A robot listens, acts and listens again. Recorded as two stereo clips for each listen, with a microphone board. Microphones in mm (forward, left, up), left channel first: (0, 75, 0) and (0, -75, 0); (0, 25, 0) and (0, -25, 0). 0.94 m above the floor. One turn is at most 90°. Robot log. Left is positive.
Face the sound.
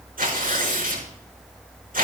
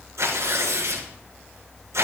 note: The tearing paper: about 70° right or 110° right.
cmd yaw -70
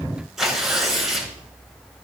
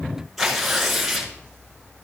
end: Found it: tearing paper, straight ahead, over 4 m away.